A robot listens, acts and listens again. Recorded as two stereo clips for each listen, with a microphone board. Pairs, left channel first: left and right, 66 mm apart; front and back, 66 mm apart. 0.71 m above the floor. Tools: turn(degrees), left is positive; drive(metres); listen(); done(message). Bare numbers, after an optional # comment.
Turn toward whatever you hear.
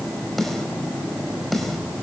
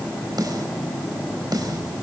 # The snare drum: straight behind.
turn(180)
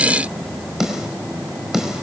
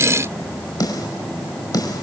done("Found it: a snare drum, straight ahead, over 4 m away.")